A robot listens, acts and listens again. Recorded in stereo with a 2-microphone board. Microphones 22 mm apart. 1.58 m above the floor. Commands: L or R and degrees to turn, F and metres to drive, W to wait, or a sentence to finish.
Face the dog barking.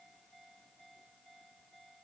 W
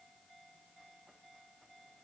W
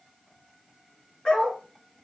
L55
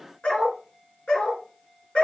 L70
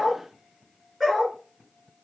Found it: a dog barking, straight ahead, over 4 m away.